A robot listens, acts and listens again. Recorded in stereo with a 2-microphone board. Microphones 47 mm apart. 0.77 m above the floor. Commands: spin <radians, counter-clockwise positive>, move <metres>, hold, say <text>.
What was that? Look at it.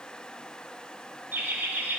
spin -0.79
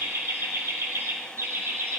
spin -1.92
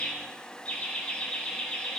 spin 0.35
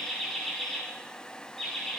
say Found it: laughter, straight ahead.